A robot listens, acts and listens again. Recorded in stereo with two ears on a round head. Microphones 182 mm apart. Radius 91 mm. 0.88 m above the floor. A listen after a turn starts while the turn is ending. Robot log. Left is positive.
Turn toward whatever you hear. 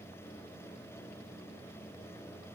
cmd idle
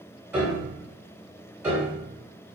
cmd yaw -30
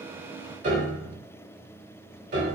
note: So it is at 140° right.
cmd yaw -140
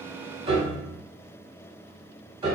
note: The piano is now 20° right.
cmd yaw -20
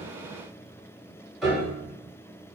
end: Found it: a piano, straight ahead, 1 to 2 m away.